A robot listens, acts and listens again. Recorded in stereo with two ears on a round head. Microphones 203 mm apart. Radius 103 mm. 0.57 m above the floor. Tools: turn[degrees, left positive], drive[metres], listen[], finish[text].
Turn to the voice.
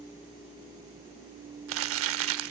Action: listen[]
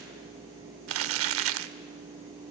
Action: listen[]
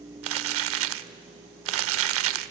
Action: finish[I can't make out anyone speaking to turn to.]